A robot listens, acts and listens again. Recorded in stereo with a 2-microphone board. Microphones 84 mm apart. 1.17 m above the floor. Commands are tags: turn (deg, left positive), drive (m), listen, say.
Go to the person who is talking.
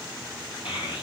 <turn deg="90"/>
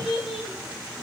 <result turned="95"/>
<drive m="1.0"/>
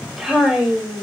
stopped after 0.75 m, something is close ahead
<say>Blocked. The child speaking is further on, straight ahead.</say>